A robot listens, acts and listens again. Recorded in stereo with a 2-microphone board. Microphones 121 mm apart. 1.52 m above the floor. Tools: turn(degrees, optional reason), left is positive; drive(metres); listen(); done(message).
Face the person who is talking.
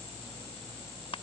listen()
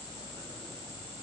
listen()
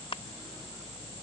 done("I can't make out anyone speaking.")